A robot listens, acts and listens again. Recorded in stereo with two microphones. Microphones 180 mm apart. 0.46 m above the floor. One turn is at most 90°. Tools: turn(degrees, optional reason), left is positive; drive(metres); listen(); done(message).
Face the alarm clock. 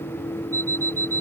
turn(degrees=30)
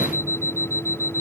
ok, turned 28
turn(degrees=-15, reason="So it is at 15° right.")
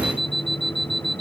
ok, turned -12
done("Facing the alarm clock.")